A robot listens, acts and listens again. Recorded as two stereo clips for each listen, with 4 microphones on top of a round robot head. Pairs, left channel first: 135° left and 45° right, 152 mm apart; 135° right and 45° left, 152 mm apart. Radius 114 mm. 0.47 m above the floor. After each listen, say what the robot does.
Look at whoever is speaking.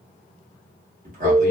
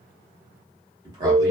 Turn 20° right.
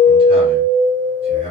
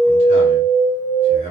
Found it: a man speaking, straight ahead, 1 to 2 m away.